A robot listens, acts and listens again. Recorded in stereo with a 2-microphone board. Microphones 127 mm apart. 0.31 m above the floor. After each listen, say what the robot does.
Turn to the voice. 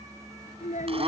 Turn 70° left.
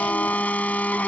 Keep listening.
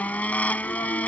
Keep listening.
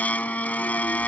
I heard a child speaking, but can't make it out now. It was about straight ahead or 40° left.